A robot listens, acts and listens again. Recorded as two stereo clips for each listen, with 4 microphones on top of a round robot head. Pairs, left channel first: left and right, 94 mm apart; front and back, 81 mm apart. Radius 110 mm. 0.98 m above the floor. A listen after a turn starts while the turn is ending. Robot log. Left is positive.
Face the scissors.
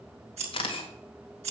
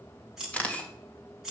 note: The scissors: 95° right.
cmd yaw -95
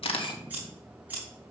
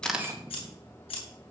note: The scissors is now 15° right.
cmd yaw -15
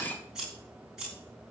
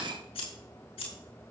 end: Found it: scissors, straight ahead, over 4 m away.